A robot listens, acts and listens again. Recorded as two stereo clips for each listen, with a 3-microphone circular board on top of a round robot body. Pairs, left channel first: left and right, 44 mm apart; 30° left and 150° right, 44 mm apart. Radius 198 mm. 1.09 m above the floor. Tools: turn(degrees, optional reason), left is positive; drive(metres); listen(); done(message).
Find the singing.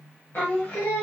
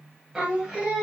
turn(degrees=145, reason="The singing: 145° left.")
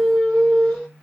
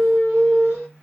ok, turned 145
done("Found it: singing, straight ahead.")